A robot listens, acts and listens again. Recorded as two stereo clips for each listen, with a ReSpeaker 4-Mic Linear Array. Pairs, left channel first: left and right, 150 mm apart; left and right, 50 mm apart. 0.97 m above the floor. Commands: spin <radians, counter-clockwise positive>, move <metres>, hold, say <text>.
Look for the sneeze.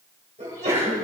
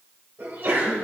spin -1.05
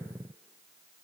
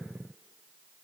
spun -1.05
hold
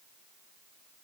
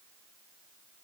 say I heard a sneeze, but can't make it out now. It was about straight ahead or 60° right.